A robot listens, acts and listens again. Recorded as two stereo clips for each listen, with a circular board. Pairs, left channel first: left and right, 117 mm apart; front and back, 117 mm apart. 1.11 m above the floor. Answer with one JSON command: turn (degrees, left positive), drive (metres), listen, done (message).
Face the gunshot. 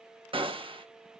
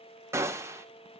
{"turn": -115}
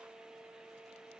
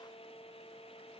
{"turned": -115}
{"done": "Facing where the gunshot came from. I can't hear it now."}